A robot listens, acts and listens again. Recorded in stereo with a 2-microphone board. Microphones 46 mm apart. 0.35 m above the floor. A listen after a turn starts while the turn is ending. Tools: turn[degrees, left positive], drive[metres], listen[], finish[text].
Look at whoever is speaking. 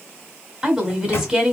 Action: turn[-30]
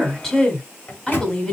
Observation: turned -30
Thought: So it is at 15° left.
Action: turn[15]
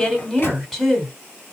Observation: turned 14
Action: finish[Found it: a woman speaking, straight ahead.]